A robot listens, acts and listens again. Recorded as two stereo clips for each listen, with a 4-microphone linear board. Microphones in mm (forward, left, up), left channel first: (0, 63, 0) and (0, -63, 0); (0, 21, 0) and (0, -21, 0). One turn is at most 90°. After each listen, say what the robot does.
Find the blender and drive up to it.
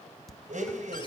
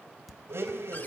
Turn 90° right.
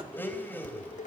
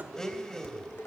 Turn 15° left.
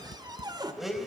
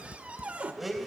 Drive 1.0 m forward.
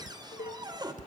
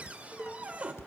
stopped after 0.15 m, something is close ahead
Keep listening.
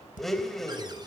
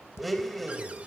Something is in my way. I am facing the blender but have not reached it.